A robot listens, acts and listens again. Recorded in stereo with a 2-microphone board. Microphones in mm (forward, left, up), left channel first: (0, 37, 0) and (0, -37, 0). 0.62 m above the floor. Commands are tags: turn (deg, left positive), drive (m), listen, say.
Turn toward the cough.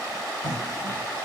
<turn deg="-60"/>
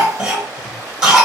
<turn deg="-10"/>
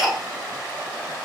<say>Facing the cough.</say>